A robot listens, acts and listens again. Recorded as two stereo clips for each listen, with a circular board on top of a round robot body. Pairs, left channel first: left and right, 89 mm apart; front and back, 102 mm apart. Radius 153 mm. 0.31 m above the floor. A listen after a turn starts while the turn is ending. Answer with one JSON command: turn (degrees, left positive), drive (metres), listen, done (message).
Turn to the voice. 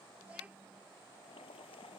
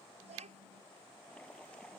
{"turn": -165}
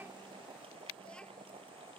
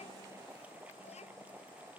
{"listen": true}
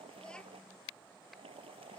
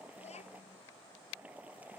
{"turn": 10}
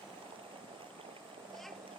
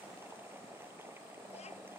{"listen": true}
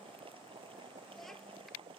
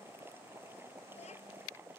{"listen": true}
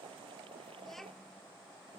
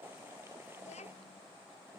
{"done": "Found it: a child speaking, straight ahead."}